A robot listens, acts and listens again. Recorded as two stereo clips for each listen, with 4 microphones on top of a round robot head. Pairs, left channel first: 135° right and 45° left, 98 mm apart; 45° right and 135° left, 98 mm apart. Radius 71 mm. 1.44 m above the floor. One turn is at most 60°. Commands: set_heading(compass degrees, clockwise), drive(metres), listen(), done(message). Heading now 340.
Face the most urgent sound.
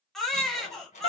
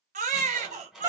set_heading(280)
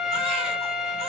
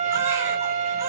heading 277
set_heading(217)
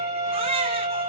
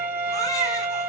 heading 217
set_heading(207)
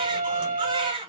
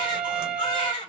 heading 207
done("Facing the baby crying.")